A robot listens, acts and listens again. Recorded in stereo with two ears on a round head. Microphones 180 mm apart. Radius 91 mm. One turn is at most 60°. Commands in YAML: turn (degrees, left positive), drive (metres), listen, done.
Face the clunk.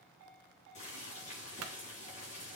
turn: -60
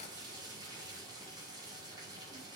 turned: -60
turn: -30
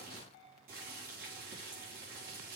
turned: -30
done: "I heard a clunk from this way, but can't make it out now."